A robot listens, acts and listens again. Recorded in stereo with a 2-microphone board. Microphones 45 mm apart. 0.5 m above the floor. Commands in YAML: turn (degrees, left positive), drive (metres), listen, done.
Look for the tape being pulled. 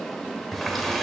listen: true
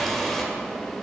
listen: true
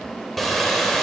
done: "I can't make out tape being pulled, only a running tap."